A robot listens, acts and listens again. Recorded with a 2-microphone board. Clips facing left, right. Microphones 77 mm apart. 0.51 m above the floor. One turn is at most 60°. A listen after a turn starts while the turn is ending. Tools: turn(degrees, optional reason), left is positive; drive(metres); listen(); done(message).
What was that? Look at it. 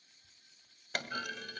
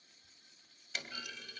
turn(degrees=60, reason="The clunk: about 60° left or 120° left.")
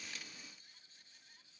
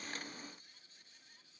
listen()
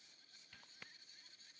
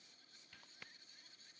done("I heard a clunk, but can't make it out now. It was about straight ahead or 60° left.")